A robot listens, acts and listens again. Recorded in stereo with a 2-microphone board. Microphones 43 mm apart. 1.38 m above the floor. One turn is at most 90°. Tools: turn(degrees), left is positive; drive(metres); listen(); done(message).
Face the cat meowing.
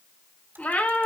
turn(degrees=40)
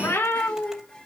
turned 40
turn(degrees=90)
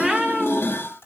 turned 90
turn(degrees=-15)
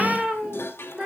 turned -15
turn(degrees=-20)
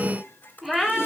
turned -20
done("Found it: a cat meowing, straight ahead, 2 to 4 m away.")